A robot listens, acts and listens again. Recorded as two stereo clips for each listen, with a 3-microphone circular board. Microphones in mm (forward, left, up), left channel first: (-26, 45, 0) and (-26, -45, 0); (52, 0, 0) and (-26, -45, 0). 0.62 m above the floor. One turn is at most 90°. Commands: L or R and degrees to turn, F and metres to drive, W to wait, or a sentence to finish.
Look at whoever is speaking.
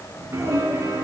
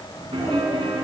R35
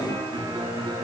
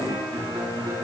W
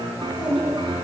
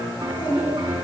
Facing the child speaking.